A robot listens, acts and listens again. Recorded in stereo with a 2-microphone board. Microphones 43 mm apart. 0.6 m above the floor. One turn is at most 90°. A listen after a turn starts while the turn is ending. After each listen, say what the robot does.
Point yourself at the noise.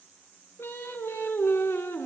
Turn 90° left.
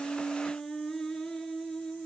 Turn 10° left.
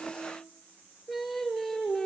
Facing the singing.